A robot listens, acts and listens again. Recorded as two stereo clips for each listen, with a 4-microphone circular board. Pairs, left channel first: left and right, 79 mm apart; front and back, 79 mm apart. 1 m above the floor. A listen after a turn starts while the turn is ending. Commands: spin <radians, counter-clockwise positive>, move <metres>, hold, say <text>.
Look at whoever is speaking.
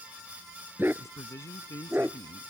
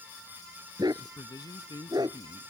spin 0.70
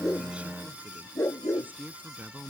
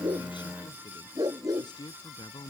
spin -0.44
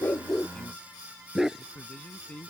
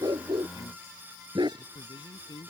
spin 0.26
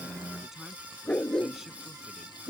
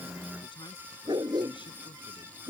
hold
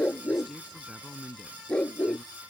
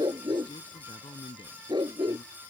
say Found it: a man speaking, straight ahead.